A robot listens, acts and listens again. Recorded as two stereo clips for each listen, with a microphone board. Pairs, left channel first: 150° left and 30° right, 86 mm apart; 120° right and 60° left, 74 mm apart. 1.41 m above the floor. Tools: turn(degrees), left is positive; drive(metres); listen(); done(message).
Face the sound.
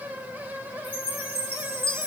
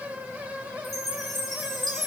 turn(degrees=155)
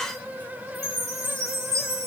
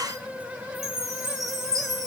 turn(degrees=30)
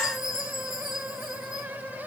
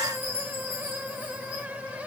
turn(degrees=-10)
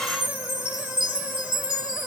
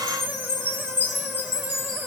done("Found it: a chime, straight ahead, 2 to 4 m away.")